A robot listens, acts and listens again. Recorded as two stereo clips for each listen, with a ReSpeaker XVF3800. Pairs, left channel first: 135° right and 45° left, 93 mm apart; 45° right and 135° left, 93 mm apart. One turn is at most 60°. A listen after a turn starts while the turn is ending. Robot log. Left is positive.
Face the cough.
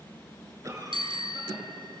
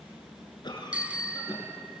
note: The cough: 10° right.
cmd yaw -10
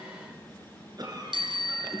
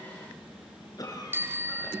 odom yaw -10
end: Facing the cough, over 4 m away.